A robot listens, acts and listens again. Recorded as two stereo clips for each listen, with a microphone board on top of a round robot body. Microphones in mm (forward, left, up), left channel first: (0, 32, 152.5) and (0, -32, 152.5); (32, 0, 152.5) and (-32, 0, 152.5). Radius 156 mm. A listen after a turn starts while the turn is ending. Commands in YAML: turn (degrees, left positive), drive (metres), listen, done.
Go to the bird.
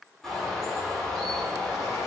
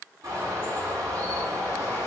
turn: 175
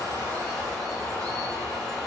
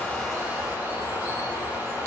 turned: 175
turn: 15
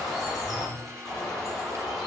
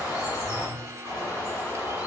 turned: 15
drive: 1.0
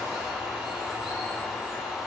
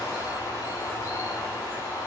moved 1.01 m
drive: 1.0
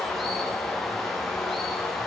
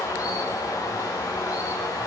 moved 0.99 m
drive: 1.0
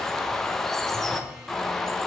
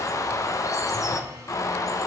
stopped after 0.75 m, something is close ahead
turn: 10
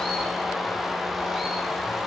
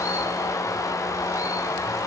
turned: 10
done: "Arrived at the bird, straight ahead."